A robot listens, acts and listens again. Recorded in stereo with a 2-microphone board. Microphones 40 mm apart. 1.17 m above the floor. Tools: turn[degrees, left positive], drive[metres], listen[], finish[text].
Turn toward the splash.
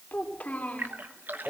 Thought: The splash: about 55° right or 125° right.
Action: turn[-55]
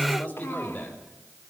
Action: listen[]
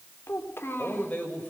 Action: finish[I heard a splash, but can't make it out now. It was about straight ahead or 70° right.]